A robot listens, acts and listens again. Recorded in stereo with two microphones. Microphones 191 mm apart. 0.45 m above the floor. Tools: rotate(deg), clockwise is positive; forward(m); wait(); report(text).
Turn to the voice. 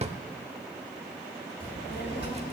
rotate(-65)
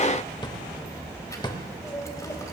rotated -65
rotate(-20)
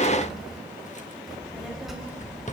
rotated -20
report("Found it: a child speaking, straight ahead, 2 to 4 m away.")